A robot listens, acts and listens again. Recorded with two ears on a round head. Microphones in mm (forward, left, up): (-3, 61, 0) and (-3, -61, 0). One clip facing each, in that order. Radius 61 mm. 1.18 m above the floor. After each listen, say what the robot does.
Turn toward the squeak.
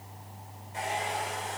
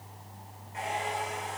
Keep listening.
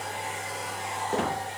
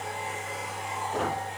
Turn 75° left.
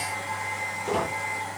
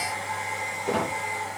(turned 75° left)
Found it: a squeak, straight ahead.